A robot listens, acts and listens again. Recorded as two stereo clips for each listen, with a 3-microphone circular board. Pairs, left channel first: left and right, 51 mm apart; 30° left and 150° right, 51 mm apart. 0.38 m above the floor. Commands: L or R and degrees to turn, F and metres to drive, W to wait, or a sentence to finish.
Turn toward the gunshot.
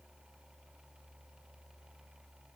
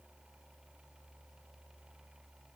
W
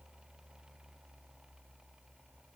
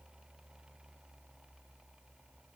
W
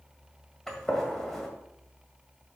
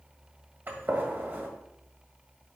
L175
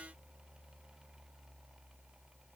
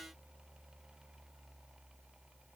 I heard a gunshot from this way, but can't make it out now.